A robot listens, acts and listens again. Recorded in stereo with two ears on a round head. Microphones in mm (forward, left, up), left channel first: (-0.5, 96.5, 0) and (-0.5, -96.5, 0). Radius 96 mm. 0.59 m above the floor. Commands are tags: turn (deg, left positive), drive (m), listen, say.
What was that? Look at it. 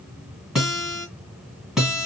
<turn deg="30"/>
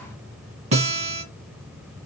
<turn deg="-35"/>
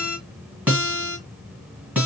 <say>Found it: a guitar, straight ahead, 1 to 2 m away.</say>